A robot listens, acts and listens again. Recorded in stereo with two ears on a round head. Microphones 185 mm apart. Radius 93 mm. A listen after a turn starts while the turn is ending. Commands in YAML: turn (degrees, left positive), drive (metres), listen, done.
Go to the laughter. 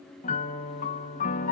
listen: true
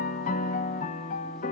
listen: true
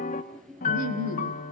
turn: -70
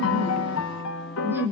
turn: -10
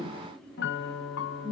drive: 1.0
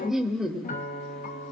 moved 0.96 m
drive: 1.0
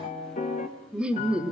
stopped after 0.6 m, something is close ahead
done: "Arrived at the laughter, straight ahead."